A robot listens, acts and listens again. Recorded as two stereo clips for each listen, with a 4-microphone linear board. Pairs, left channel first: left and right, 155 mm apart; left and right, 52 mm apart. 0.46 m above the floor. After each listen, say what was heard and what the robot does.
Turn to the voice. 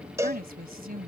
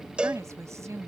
The woman speaking: about 70° right or 110° right. Turn 70° right.
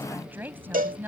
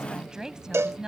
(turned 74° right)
So it is at 15° right. Turn 15° right.
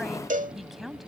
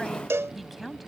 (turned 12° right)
Facing the woman speaking.